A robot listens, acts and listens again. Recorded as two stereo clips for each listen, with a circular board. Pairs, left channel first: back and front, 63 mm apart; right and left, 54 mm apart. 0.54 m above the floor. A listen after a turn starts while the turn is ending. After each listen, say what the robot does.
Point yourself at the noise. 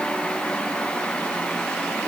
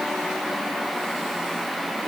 Keep listening.
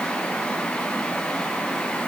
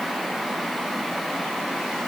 Keep listening.
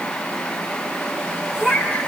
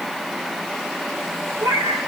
Turn 85° left.
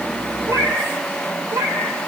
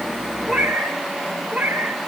Turn 10° left.
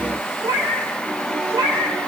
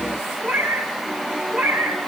Found it: a cat meowing, straight ahead.